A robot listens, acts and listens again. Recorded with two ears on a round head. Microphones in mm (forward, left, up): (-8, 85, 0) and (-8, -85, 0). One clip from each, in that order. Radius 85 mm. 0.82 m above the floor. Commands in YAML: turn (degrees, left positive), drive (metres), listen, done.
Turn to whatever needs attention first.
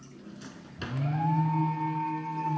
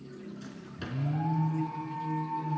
turn: 65
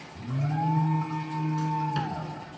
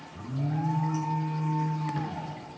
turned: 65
turn: 50
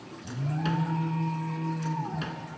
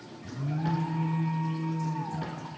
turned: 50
turn: 15
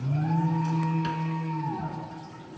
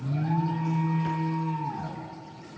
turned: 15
done: "Facing the alarm."